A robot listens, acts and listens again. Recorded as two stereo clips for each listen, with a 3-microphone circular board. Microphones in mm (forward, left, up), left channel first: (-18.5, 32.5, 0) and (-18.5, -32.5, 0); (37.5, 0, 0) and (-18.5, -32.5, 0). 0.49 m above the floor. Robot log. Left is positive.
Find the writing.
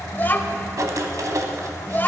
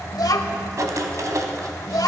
note: The writing: 120° right.
cmd yaw -120
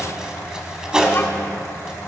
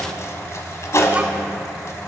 note: The writing is now 10° right.
cmd yaw -10
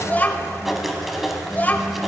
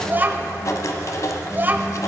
end: Facing the writing, 1 to 2 m away.